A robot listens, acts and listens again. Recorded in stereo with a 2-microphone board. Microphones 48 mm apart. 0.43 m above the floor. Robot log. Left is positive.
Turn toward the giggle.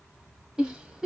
note: The giggle: about 15° right or 165° right.
cmd yaw -15
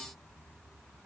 cmd idle
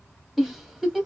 end: Found it: a giggle, straight ahead.